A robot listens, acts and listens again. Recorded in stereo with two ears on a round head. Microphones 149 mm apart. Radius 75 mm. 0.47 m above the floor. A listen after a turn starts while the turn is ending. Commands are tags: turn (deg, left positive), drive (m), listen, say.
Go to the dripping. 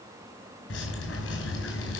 <turn deg="90"/>
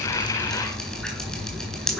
<drive m="1.0"/>
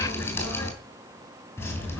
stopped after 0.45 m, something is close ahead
<turn deg="15"/>
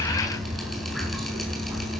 <say>Blocked. The dripping is further on, straight ahead.</say>